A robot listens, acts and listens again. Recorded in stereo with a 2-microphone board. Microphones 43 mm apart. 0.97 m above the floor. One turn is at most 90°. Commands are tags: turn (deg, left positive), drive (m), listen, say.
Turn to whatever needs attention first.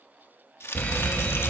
<turn deg="40"/>
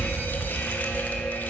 <turn deg="90"/>
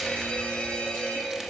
<turn deg="30"/>
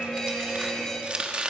<turn deg="15"/>
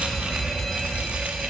<say>Found it: a fire alarm, straight ahead.</say>